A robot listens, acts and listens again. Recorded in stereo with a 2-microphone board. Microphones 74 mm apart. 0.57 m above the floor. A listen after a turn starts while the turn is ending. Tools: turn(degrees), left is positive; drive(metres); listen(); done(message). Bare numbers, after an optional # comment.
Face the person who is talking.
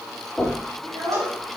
turn(-90)
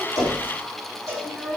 done("Found it: a child speaking, straight ahead.")